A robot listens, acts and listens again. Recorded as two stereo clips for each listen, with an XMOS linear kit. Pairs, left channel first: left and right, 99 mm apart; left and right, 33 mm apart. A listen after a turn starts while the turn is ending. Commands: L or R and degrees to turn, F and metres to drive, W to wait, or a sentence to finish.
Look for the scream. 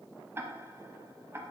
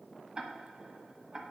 W
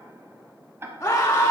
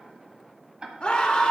L25
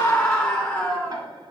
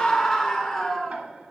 Found it: a scream, straight ahead, 1 to 2 m away.